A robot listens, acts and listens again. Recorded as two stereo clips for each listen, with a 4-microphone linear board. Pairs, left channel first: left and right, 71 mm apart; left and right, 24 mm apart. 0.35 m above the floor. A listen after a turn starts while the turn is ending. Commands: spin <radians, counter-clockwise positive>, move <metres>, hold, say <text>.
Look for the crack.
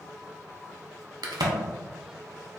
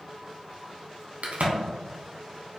spin -1.57
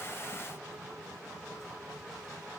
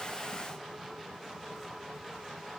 say I heard a crack from this way, but can't make it out now.